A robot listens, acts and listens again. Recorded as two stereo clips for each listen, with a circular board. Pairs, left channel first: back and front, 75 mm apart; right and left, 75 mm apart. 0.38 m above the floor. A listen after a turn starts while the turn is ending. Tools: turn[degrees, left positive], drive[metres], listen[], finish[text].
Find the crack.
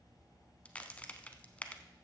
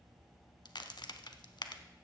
Thought: The crack: 105° right.
Action: turn[-105]
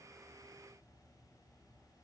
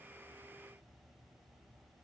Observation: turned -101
Action: finish[Facing where the crack came from. I can't hear it now.]